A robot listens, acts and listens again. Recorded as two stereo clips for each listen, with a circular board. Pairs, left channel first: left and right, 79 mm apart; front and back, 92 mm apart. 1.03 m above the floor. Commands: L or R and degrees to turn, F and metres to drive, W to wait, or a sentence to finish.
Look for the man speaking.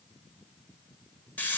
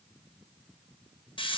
W
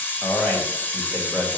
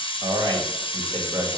L165
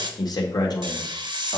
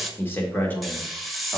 L80
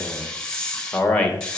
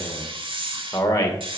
L20
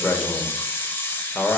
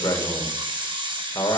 Found it: a man speaking, straight ahead, 1 to 2 m away.